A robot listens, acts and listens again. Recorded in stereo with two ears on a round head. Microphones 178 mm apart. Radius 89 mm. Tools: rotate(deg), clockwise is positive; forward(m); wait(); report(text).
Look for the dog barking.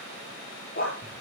rotate(-45)
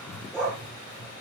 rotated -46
report("Found it: a dog barking, straight ahead, over 4 m away.")